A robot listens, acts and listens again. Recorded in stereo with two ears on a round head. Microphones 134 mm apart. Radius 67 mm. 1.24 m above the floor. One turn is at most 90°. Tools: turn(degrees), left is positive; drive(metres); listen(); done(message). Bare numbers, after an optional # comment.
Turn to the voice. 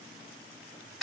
listen()
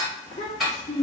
# The child speaking: about 35° left or 145° left.
turn(35)
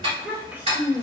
# So it is at 15° right.
turn(-15)
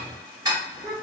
# The child speaking is now 10° right.
turn(-10)
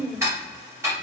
done("Found it: a child speaking, straight ahead.")